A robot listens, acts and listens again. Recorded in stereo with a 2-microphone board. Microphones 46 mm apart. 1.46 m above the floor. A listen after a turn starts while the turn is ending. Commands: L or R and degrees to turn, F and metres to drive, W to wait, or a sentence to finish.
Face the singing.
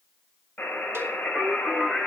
R30
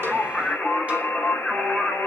L15
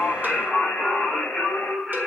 Found it: singing, straight ahead, over 4 m away.